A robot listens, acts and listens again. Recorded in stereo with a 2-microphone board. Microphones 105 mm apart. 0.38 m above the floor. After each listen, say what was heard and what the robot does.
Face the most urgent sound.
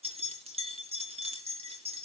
Keep listening.
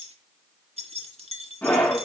The scream: about 15° left or 165° left. Turn 15° left.
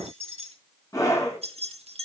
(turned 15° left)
So it is at 150° left. Turn 150° left.
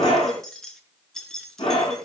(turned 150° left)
The scream is now 65° left. Turn 65° left.
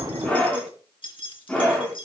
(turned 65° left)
The scream is now 15° left. Turn 15° left.
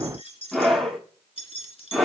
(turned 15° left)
Found it: a scream, straight ahead.